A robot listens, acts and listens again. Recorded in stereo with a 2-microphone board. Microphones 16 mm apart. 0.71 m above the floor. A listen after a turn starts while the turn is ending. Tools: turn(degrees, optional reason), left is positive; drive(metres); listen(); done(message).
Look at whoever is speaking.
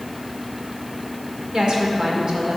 turn(degrees=-60, reason="The woman speaking: about 60° right or 120° right.")
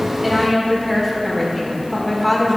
done("Facing the woman speaking.")